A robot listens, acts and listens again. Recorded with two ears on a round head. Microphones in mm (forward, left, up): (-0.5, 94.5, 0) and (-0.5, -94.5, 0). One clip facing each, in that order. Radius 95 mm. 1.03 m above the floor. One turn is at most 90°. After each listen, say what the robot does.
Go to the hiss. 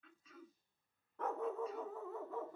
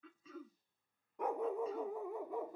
Keep listening.
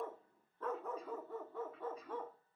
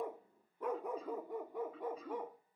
Keep listening.
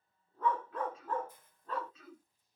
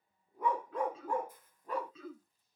Turn 25° left.
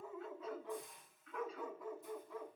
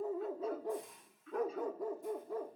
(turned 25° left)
Drive 1.0 m forward.
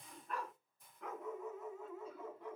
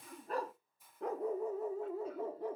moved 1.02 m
Drive 1.0 m forward.
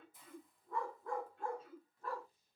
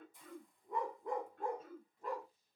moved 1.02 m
Drive 1.0 m forward.
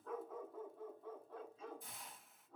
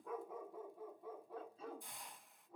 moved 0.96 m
Drive 1.0 m forward.
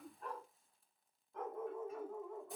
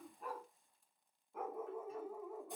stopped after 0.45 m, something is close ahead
Keep listening.
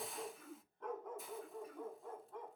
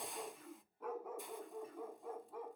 Arrived at the hiss, straight ahead.